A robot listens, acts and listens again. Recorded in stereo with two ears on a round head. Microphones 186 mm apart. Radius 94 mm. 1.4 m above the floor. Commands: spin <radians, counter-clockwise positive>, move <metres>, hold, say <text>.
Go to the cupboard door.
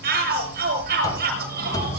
spin 0.35
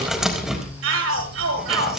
move 1.0
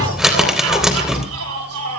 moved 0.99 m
move 1.0
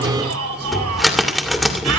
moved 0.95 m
move 1.0
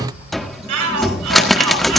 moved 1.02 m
move 1.0
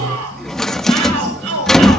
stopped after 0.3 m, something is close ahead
say Arrived at the cupboard door, straight ahead.